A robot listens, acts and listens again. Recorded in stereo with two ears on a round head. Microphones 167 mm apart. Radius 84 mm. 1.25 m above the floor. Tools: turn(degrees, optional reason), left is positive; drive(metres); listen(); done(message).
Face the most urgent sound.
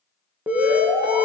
turn(degrees=-30)
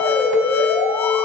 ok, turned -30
turn(degrees=20, reason="So it is at 20° left.")
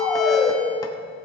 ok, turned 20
done("Found it: an alarm, straight ahead, 2 to 4 m away.")